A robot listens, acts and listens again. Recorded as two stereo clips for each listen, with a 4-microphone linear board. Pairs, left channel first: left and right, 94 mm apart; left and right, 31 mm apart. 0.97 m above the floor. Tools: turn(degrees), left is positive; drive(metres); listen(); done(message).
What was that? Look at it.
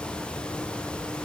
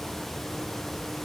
listen()
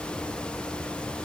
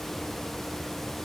listen()
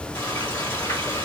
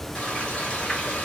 turn(degrees=35)
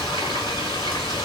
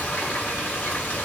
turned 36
turn(degrees=110)
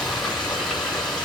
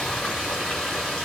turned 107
done("Found it: frying, straight ahead.")